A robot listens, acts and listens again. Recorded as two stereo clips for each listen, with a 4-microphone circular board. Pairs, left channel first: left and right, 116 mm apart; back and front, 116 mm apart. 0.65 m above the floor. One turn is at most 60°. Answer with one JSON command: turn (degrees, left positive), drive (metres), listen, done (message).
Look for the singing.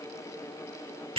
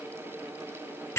{"listen": true}
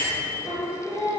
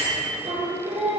{"turn": 10}
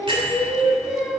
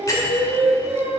{"done": "Found it: singing, straight ahead."}